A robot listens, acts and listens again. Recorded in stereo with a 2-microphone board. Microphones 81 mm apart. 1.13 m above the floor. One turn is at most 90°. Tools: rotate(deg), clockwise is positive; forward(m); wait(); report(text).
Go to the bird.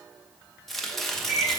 rotate(30)
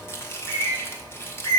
rotate(90)
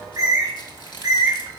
rotate(50)
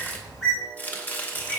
forward(1.0)
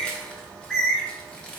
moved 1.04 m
rotate(-10)
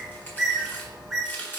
forward(1.0)
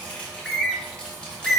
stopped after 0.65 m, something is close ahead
report("I am next to the bird.")